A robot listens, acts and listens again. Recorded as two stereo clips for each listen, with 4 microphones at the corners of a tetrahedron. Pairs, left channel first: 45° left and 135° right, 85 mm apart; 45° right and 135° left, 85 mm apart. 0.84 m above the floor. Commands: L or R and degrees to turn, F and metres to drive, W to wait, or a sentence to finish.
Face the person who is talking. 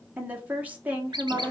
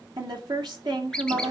L155
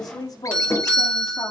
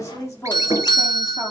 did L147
L10
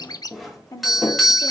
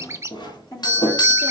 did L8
Facing the woman speaking.